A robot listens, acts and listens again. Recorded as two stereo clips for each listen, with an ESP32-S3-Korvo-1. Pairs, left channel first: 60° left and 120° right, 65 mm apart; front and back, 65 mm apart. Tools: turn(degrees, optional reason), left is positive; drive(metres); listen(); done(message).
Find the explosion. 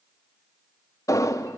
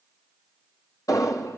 turn(degrees=25, reason="The explosion: 25° left.")
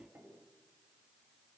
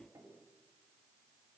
done("I heard an explosion from this way, but can't make it out now.")